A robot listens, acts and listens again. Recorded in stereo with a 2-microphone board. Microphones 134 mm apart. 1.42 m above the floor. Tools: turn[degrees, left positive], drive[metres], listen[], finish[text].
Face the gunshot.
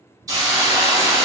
Action: listen[]
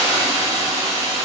Action: listen[]
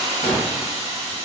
Thought: The gunshot: about 55° left or 125° left.
Action: turn[55]
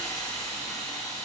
Action: listen[]
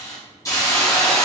Action: finish[I heard a gunshot, but can't make it out now. It was about straight ahead or 70° left.]